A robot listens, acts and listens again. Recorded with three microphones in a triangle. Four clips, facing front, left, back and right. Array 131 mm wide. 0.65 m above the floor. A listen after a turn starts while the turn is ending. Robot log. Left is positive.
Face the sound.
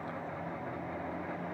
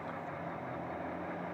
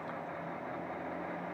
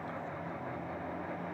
cmd idle
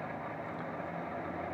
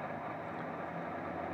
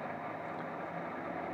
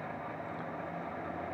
cmd idle
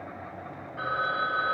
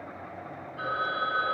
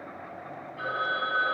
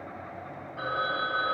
note: The phone ringing: 55° right.
cmd yaw -55
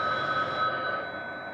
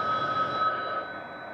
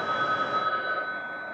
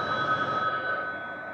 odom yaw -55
note: The phone ringing is now 15° right.
cmd yaw -15
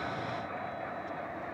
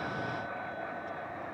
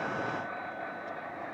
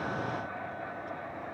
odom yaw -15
cmd idle
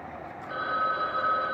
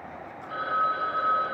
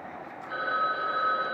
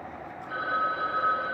end: Facing the phone ringing.